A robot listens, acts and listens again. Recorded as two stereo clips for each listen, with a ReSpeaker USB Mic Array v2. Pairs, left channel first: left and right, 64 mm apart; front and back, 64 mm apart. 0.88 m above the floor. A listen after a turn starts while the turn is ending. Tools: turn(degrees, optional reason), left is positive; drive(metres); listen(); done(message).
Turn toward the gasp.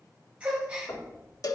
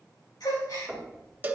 turn(degrees=-15, reason="The gasp: 15° right.")
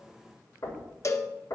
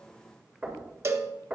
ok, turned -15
done("Facing where the gasp came from. I can't hear it now.")